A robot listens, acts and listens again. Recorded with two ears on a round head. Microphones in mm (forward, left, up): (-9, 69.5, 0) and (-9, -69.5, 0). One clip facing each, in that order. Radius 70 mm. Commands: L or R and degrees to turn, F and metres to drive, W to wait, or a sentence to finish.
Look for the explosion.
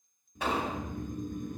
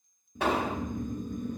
R55
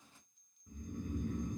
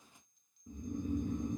W
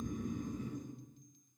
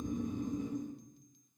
I heard an explosion, but can't make it out now. It was about straight ahead or 70° right.